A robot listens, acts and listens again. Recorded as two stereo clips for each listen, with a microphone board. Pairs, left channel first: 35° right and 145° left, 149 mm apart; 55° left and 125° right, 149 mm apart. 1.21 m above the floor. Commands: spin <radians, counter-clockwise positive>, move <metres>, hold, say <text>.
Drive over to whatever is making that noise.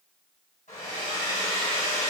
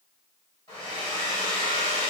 move 1.0
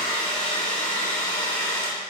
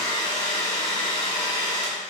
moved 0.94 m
move 1.0
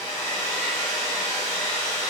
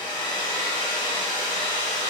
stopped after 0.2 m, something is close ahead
say I am next to the hair dryer.